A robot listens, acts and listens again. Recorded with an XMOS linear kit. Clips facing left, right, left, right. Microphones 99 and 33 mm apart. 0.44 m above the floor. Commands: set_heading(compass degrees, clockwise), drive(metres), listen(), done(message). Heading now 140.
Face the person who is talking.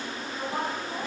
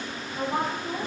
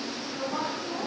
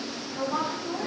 set_heading(185)
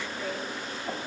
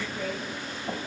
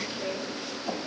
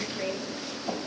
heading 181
set_heading(276)
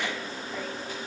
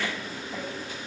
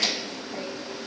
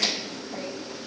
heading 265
set_heading(275)
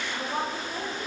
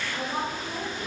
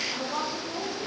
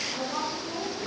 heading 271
done("Found it: a woman speaking, straight ahead.")